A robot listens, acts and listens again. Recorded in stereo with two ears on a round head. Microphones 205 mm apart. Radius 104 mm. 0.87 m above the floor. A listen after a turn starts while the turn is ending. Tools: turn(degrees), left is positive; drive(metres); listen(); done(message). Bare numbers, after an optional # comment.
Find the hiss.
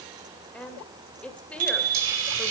# The hiss: about 60° right or 120° right.
turn(-60)
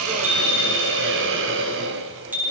# So it is at 55° right.
turn(-55)
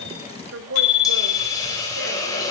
# The hiss is now 15° left.
turn(15)
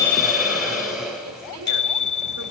done("Found it: a hiss, straight ahead, over 4 m away.")